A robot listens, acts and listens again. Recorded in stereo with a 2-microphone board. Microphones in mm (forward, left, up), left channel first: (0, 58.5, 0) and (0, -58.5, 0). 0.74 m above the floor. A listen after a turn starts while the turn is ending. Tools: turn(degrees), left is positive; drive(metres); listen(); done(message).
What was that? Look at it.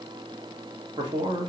turn(degrees=-45)
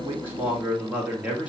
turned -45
turn(degrees=-15)
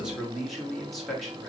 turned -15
done("Found it: a man speaking, straight ahead, 1 to 2 m away.")